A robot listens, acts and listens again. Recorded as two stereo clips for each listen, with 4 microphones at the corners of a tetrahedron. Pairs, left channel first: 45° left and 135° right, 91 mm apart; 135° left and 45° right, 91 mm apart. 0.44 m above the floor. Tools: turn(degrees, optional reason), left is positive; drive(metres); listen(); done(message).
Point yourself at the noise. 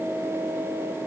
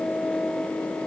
listen()
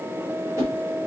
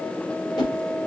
turn(degrees=170, reason="The whoosh: 170° left.")
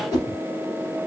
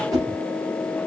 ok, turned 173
done("Found it: a whoosh, straight ahead, 2 to 4 m away.")